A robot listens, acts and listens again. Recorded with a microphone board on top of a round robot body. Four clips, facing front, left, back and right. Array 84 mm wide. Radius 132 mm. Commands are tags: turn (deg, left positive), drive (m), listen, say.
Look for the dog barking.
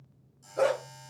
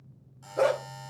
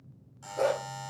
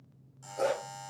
<turn deg="70"/>
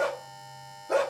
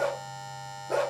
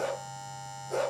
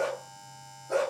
<turn deg="15"/>
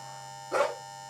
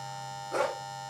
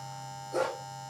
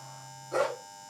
<say>Facing the dog barking.</say>